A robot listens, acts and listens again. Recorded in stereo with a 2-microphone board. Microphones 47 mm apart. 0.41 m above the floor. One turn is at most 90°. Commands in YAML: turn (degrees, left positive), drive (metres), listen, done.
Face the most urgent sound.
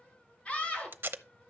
turn: 25
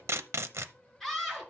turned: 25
done: "Found it: a scream, straight ahead, over 4 m away."